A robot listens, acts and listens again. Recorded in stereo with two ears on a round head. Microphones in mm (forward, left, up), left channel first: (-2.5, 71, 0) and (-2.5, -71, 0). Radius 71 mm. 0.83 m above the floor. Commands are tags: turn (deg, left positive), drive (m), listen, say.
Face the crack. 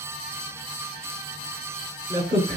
<turn deg="-40"/>
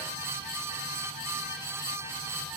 <listen/>
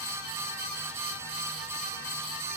<say>I heard a crack, but can't make it out now. It was about straight ahead or 100° right.</say>